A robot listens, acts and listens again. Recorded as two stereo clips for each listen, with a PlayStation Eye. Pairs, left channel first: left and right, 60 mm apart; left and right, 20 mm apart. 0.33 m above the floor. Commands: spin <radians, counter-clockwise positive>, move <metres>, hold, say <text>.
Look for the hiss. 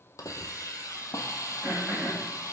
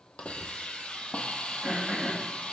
spin 1.13
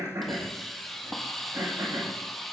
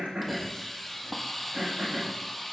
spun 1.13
say Found it: a hiss, straight ahead, 1 to 2 m away.